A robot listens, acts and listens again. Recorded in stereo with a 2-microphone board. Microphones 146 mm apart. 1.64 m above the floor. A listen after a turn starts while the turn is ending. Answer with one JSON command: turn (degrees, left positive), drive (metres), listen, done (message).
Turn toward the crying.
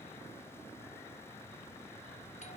{"listen": true}
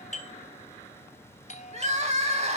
{"turn": -45}
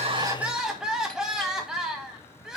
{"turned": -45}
{"done": "Found it: crying, straight ahead."}